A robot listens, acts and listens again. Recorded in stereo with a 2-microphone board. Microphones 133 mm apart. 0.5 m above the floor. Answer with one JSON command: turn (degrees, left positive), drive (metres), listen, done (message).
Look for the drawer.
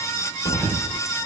{"turn": 60}
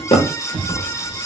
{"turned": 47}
{"turn": 55}
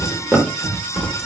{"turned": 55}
{"done": "Facing the drawer, under 1 m away."}